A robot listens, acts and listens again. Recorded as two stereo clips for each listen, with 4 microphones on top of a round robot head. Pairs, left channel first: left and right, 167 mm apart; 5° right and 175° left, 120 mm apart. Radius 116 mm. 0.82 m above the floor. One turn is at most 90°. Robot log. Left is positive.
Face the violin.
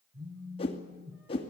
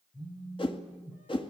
cmd idle
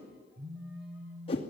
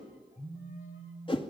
cmd idle
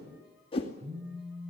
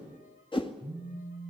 end: I can't make out a violin to turn to.